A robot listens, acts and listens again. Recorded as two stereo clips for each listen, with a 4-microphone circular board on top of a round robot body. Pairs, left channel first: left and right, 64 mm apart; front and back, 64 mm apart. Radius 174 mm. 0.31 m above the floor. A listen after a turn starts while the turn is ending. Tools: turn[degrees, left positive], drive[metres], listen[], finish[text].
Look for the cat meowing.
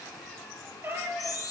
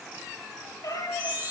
Thought: The cat meowing: 30° right.
Action: turn[-30]
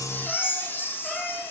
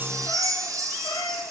Action: listen[]
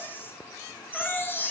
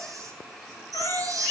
Action: listen[]
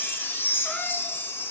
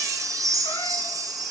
Action: finish[I heard a cat meowing from this way, but can't make it out now.]